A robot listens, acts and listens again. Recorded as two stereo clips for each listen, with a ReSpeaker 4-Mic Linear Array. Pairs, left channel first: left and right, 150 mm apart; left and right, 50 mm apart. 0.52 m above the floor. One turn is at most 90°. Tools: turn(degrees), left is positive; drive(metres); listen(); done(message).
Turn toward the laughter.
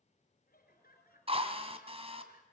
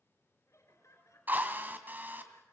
turn(degrees=90)
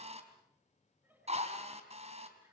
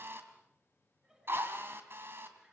turn(degrees=-10)
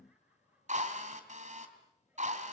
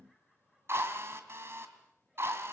turn(degrees=-10)
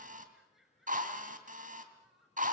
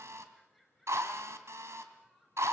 done("Facing the laughter.")